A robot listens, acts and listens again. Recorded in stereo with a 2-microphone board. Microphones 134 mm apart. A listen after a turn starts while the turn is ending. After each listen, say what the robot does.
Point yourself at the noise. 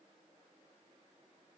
Keep listening.
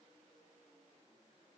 Keep listening.
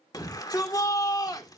Turn 30° left.
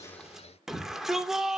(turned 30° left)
Facing the shout, 2 to 4 m away.